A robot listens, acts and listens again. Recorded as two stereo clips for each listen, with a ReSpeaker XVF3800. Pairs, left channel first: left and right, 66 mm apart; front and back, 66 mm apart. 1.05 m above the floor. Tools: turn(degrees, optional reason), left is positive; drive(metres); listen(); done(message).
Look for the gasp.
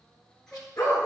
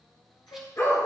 turn(degrees=10, reason="The gasp: 10° left.")
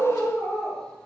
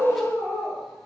done("I heard a gasp from this way, but can't make it out now.")